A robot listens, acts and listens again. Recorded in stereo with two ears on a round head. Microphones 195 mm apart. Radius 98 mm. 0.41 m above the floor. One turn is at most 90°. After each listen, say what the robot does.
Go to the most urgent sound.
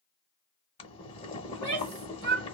Turn 50° right.
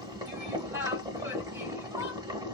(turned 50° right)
Turn 15° right.
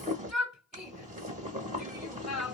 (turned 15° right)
Drive 1.0 m forward.
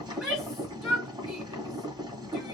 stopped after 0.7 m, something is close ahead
Arrived at the shout, straight ahead.